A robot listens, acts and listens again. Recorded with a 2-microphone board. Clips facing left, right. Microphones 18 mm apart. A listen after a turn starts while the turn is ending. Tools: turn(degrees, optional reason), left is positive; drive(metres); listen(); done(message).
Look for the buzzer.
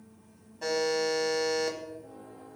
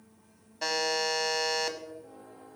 turn(degrees=-90)
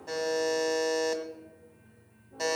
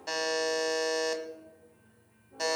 turn(degrees=-10, reason="So it is at 10° right.")
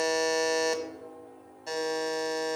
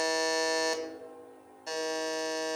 done("Found it: a buzzer, straight ahead.")